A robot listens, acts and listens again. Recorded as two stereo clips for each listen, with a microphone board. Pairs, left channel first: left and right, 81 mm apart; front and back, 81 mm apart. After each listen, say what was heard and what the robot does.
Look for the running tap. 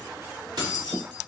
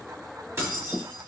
Keep listening.
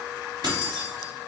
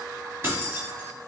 Keep listening.
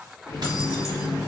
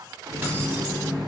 The running tap: 145° left. Turn 145° left.
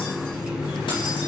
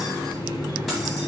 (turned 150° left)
Facing the running tap.